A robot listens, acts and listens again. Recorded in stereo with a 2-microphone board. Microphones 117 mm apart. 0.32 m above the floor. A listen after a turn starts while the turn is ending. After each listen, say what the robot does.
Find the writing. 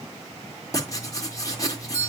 Turn 30° left.
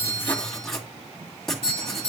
Facing the writing, 2 to 4 m away.